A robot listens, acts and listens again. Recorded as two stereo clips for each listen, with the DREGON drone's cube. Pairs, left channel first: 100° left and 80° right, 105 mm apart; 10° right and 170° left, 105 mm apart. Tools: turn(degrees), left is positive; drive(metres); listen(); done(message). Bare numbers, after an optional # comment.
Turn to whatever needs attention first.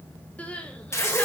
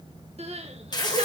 # The crying: straight behind.
turn(180)
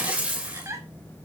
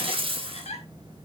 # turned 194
# The crying is now 15° right.
turn(-15)
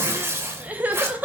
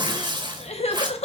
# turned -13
done("Facing the crying, 1 to 2 m away.")